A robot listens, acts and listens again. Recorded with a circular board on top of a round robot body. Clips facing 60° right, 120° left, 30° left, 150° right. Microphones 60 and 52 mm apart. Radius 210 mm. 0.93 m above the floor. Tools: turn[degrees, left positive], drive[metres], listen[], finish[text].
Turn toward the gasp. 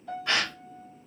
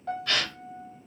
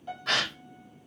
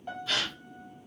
Action: finish[Facing the gasp, under 1 m away.]